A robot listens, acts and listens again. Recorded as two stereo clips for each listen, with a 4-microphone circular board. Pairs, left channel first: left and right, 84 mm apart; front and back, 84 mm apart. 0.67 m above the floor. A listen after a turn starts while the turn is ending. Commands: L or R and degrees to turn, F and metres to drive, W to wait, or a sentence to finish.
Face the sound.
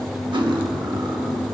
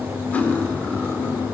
R70
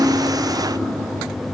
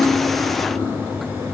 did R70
W
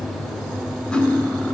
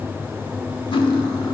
L15
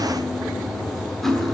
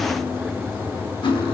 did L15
Facing the cutlery clinking.